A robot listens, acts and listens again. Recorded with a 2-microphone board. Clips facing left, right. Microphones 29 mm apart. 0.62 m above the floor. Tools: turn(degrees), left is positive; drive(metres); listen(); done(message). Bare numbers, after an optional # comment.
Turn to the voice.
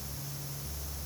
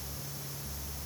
listen()
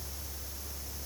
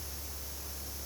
listen()
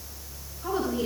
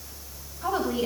# The woman speaking: about 70° right or 110° right.
turn(-70)
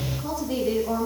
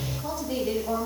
done("Facing the woman speaking.")